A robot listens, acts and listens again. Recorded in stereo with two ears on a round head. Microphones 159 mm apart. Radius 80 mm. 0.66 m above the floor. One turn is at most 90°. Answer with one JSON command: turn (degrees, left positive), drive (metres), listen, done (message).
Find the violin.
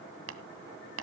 {"listen": true}
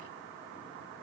{"listen": true}
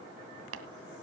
{"done": "I can't make out a violin to turn to."}